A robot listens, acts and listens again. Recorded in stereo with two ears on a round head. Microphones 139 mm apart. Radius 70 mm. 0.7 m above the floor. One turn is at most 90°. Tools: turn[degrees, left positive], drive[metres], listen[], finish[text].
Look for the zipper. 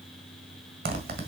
Thought: The zipper: about 60° right or 120° right.
Action: turn[-60]
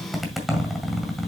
Action: finish[Facing the zipper, 1 to 2 m away.]